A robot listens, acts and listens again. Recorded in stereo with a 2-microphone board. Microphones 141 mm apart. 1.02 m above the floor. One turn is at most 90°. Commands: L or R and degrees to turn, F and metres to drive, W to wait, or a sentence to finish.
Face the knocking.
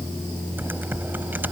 W
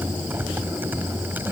W
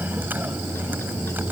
I can't make out knocking to turn to.